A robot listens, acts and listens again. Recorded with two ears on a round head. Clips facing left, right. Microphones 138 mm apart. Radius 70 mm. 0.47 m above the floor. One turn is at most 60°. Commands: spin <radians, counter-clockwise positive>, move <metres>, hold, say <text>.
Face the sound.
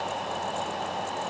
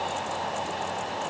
hold
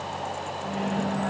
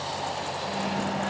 spin 1.05
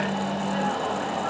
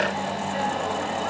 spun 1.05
spin 1.05
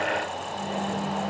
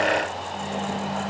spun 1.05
say Facing the microwave.